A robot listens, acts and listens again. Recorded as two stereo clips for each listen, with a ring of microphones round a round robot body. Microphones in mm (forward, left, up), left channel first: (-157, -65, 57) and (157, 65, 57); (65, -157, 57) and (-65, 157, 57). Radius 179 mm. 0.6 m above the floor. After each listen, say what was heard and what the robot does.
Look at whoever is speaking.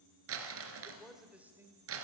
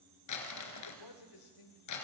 The man speaking: 60° right. Turn 60° right.
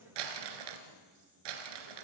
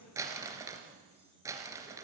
Keep listening.
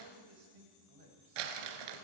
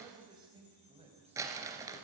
The man speaking is now 40° left. Turn 40° left.
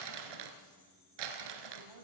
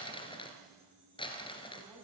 The man speaking is now 25° left. Turn 25° left.
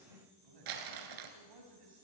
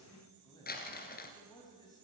The man speaking is now 10° left. Turn 10° left.
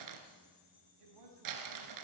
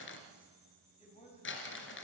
Facing the man speaking, over 4 m away.